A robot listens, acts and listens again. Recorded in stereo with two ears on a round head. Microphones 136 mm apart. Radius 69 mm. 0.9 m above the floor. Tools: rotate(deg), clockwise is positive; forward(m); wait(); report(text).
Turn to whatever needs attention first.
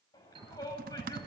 rotate(-25)
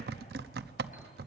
wait()
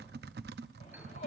rotate(-130)
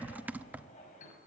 rotate(-50)
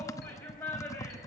rotate(-15)
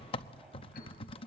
wait()
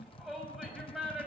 report("Found it: a shout, straight ahead.")